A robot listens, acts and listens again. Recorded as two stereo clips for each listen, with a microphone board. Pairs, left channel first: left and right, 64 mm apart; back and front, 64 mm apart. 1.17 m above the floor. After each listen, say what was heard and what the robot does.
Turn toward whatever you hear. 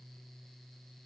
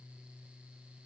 Keep listening.
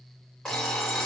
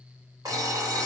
The alarm clock: 10° left. Turn 10° left.
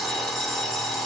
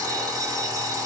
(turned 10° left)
Found it: an alarm clock, straight ahead, 1 to 2 m away.